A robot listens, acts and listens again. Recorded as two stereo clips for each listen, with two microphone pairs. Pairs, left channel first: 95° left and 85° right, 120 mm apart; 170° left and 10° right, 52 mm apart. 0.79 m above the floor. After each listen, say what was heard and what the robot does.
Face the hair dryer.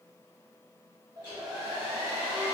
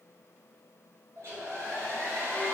The hair dryer: 25° right. Turn 25° right.
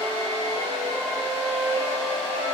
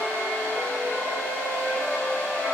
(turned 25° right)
The hair dryer is now 15° right. Turn 15° right.
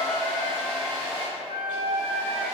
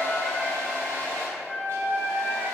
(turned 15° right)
Found it: a hair dryer, straight ahead, 1 to 2 m away.